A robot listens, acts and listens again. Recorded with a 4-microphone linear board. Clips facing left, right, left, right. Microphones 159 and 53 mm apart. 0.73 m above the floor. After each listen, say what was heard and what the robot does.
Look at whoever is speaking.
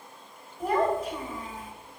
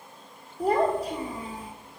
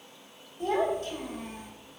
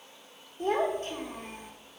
The child speaking: about 35° right or 145° right. Turn 35° right.
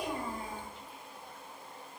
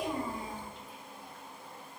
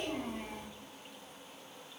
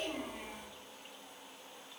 Facing the child speaking.